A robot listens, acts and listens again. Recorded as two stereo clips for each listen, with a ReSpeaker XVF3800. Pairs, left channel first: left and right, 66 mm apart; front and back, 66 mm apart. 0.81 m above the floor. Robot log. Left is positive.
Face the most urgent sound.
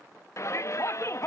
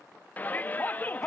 note: The shout: 55° left.
cmd yaw +55
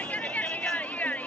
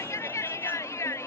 note: The shout is now 25° left.
cmd yaw +25
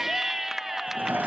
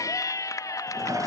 end: Found it: a shout, straight ahead, under 1 m away.